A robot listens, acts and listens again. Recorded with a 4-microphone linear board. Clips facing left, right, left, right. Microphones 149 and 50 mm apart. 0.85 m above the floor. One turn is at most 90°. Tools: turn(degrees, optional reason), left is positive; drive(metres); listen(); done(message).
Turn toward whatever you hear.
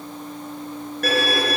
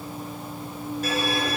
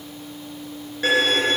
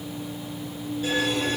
turn(degrees=75, reason="The violin: about 75° left or 105° left.")
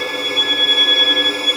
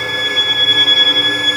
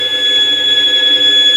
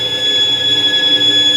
turn(degrees=25, reason="So it is at 25° left.")
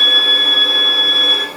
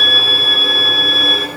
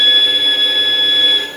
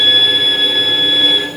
done("Found it: a violin, straight ahead.")